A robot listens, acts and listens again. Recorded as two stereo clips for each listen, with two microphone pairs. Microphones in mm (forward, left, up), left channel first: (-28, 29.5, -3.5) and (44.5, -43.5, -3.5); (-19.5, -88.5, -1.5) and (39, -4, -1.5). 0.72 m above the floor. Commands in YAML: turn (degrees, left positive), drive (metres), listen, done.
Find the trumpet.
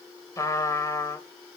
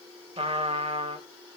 turn: 75
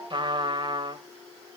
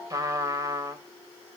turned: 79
done: "Found it: a trumpet, straight ahead."